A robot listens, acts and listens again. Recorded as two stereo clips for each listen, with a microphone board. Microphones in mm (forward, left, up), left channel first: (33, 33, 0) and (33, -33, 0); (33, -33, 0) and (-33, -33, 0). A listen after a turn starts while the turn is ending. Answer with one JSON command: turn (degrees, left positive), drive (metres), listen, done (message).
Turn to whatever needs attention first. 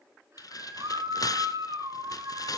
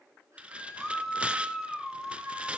{"turn": -90}
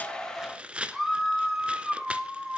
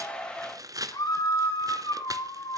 {"done": "Facing the scream."}